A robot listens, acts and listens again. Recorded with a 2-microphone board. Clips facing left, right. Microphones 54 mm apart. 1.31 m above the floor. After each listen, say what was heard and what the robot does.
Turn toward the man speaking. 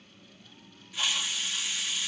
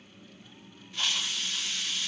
Keep listening.
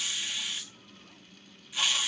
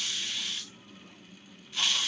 Keep listening.
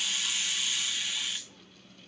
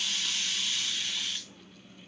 I can't make out a man speaking to turn to.